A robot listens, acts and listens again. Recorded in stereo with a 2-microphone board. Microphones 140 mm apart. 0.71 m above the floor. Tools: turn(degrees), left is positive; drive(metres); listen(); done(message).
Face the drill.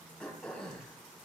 listen()
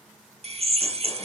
turn(degrees=-50)
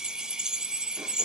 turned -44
done("Facing the drill.")